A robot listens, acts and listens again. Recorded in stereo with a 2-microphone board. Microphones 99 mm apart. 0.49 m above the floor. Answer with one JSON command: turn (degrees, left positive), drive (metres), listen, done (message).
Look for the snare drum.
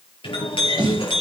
{"turn": -60}
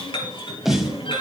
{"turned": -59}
{"done": "Found it: a snare drum, straight ahead, 2 to 4 m away."}